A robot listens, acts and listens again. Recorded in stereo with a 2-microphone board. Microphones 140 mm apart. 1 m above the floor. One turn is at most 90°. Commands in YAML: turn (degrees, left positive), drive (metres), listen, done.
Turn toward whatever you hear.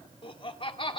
turn: 40
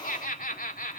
turn: 90
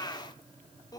turn: 25
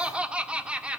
turn: -10
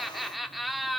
done: "Facing the laughter, 2 to 4 m away."